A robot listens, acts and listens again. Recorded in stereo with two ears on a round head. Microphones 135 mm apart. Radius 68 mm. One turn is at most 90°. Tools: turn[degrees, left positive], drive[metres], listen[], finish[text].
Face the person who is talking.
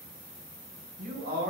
Thought: The man speaking: about 70° right or 110° right.
Action: turn[-70]
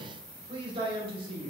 Thought: So it is at 35° right.
Action: turn[-35]
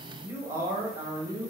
Thought: The man speaking is now 20° right.
Action: turn[-20]
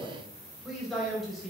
Action: finish[Facing the man speaking, 2 to 4 m away.]